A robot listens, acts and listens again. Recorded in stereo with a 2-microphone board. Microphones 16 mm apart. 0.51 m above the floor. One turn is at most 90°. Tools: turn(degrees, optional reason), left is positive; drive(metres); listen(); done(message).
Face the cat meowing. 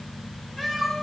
turn(degrees=30)
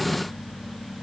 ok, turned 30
listen()
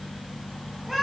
turn(degrees=-40, reason="So it is at 40° right.")
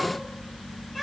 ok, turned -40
turn(degrees=-15, reason="The cat meowing is now 15° right.")
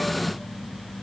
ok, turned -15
listen()
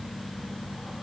listen()
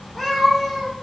done("Facing the cat meowing.")